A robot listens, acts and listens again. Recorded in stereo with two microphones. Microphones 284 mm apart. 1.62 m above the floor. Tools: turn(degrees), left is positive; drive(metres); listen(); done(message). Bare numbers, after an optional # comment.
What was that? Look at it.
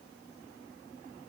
listen()
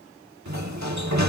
# The sliding door: about 70° right or 110° right.
turn(-70)
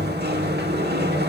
# So it is at 35° right.
turn(-35)
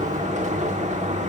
# The sliding door is now 25° right.
turn(-25)
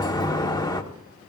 # The sliding door is now 15° left.
turn(15)
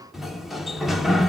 done("Facing the sliding door, 1 to 2 m away.")